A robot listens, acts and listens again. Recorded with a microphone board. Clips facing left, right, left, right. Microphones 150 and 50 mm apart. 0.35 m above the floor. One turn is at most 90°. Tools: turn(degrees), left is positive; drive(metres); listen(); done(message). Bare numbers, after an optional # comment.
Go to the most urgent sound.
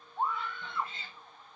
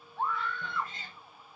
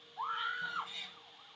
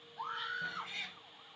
# The scream: about 20° left or 160° left.
turn(20)
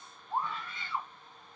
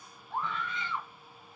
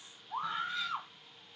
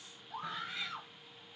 # So it is at 140° left.
turn(90)
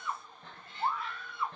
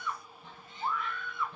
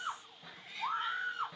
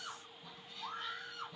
# The scream is now 40° left.
turn(40)
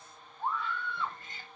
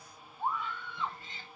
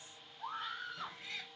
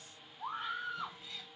# The scream is now 15° right.
turn(-15)
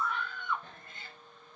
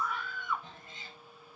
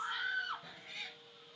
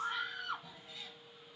drive(1.0)
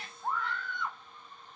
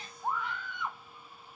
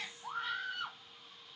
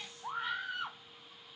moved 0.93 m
# The scream is now 15° right.
turn(-15)
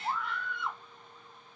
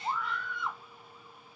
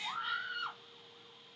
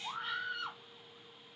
drive(1.0)
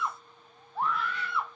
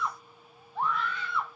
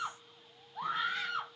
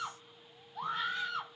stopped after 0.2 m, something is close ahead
done("I am next to the scream.")